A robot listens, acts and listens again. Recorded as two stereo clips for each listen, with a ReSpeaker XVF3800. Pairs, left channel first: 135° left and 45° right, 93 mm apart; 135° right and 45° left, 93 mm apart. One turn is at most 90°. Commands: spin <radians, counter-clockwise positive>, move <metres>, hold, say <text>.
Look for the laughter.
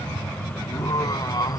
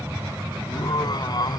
spin -1.57
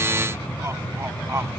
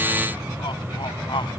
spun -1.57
spin -1.48
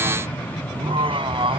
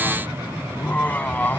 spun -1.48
spin -1.05
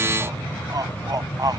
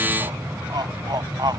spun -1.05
say Facing the laughter.